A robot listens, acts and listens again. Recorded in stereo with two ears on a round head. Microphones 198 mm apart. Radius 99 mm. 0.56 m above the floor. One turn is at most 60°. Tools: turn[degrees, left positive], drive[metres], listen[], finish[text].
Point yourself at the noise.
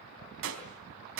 Thought: The gunshot: about 60° right or 120° right.
Action: turn[-60]
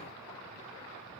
Action: listen[]
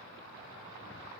Action: finish[I heard a gunshot, but can't make it out now. It was about straight ahead or 60° right.]